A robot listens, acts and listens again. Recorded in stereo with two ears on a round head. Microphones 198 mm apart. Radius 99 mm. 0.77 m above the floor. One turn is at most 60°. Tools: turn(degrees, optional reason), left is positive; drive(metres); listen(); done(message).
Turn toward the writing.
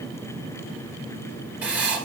turn(degrees=-30)
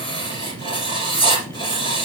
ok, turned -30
turn(degrees=25, reason="So it is at 25° left.")
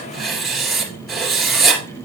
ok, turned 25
done("Facing the writing, 2 to 4 m away.")